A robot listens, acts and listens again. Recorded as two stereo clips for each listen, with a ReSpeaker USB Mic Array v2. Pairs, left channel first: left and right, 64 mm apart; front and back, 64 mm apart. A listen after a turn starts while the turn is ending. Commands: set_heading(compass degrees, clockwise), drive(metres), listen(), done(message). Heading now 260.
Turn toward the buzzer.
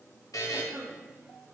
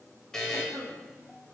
set_heading(180)
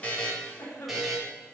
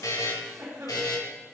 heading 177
done("Found it: a buzzer, straight ahead.")